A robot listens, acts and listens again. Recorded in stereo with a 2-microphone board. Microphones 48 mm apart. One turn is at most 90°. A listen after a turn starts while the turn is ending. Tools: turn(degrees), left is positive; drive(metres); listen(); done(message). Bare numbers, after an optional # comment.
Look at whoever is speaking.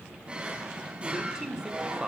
turn(-30)
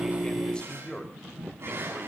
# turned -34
# So it is at 20° left.
turn(20)
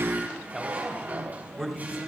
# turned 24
done("Facing the man speaking.")